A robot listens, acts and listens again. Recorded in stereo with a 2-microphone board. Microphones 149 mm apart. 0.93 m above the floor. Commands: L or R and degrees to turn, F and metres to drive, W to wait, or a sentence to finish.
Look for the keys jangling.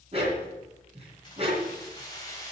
L20
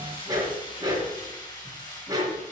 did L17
L25
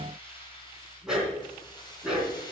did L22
L30
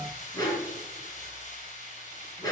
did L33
L120
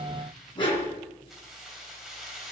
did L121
Facing the keys jangling, 2 to 4 m away.